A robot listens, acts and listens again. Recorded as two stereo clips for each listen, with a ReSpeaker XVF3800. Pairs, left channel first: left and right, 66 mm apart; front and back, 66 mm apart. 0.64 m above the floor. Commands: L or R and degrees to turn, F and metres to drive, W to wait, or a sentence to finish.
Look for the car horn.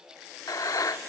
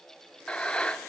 W
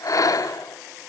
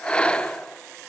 W
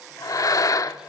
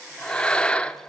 I can't make out a car horn to turn to.